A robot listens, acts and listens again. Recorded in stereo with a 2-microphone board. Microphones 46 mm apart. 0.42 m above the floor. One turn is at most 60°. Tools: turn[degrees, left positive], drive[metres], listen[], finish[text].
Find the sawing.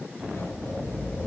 Action: listen[]
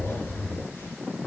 Action: listen[]
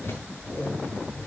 Action: finish[I can't make out sawing, only a zipper.]